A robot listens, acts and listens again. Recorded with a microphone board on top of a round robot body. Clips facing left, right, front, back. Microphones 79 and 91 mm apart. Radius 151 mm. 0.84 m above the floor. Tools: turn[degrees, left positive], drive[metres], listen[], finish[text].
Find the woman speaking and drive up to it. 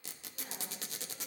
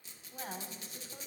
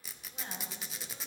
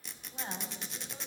Thought: The woman speaking: 110° right.
Action: turn[-110]
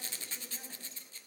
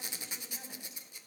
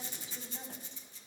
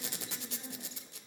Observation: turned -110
Action: listen[]
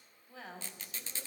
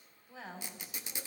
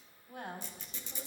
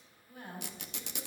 Action: drive[1.0]
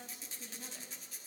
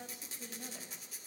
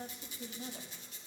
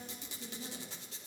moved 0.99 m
Action: drive[1.0]
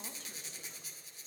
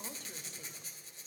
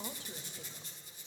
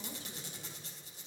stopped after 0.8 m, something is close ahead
Action: listen[]
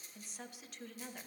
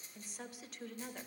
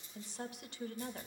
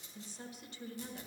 Action: finish[Arrived at the woman speaking, straight ahead.]